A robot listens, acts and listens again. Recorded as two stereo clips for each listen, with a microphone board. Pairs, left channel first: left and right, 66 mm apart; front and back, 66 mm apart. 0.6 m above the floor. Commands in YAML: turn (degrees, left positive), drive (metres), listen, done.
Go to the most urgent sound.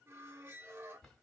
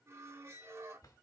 listen: true
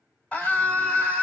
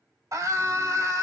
turn: 160
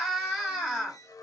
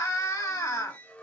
drive: 1.0
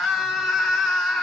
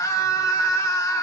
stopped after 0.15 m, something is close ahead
done: "Blocked. The scream is further on, straight ahead."